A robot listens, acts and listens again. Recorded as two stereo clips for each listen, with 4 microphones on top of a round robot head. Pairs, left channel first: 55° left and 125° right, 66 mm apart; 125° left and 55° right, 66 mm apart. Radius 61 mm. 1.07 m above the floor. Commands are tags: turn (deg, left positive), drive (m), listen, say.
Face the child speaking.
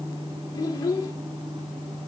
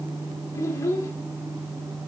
<turn deg="80"/>
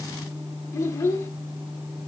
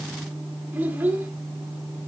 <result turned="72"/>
<turn deg="10"/>
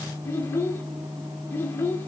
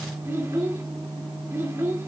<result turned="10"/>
<say>Facing the child speaking, 2 to 4 m away.</say>